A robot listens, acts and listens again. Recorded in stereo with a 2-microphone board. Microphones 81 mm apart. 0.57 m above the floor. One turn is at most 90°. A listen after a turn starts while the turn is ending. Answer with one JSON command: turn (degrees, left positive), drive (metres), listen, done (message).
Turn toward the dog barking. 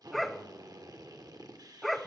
{"turn": 30}
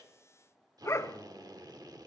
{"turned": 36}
{"turn": 90}
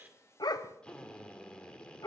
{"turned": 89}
{"turn": 55}
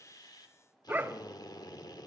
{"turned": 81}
{"turn": -25}
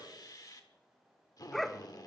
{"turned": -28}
{"done": "Found it: a dog barking, straight ahead, under 1 m away."}